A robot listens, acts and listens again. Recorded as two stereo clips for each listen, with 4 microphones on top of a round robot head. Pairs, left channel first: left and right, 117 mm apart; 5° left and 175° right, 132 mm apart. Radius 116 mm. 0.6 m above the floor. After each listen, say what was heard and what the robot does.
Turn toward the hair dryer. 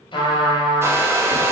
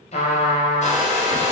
The hair dryer: 25° right. Turn 25° right.
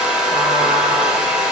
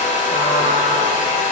Facing the hair dryer, under 1 m away.